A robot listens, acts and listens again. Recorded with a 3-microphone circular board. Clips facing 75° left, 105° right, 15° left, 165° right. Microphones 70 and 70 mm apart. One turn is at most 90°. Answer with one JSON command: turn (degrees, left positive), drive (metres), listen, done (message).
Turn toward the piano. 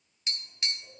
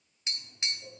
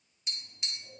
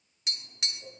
{"listen": true}
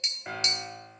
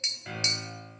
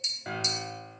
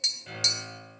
{"turn": 10}
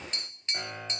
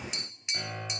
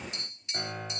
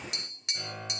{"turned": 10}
{"done": "Found it: a piano, straight ahead."}